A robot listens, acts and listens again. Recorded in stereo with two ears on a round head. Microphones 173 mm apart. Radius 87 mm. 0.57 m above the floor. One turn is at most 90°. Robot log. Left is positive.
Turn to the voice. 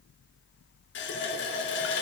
cmd idle
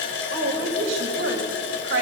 note: The woman speaking: about 70° right or 110° right.
cmd yaw -70
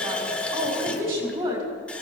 note: So it is at 25° right.
cmd yaw -25
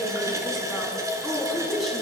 end: Found it: a woman speaking, straight ahead.